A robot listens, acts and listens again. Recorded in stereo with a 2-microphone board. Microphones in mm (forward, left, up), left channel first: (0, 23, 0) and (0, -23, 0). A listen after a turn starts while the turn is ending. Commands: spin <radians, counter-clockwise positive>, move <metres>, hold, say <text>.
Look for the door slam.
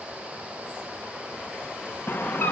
spin 0.87
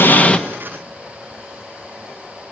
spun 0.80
hold
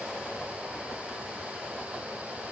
say I heard a door slam, but can't make it out now. It was about 5° left or 85° left.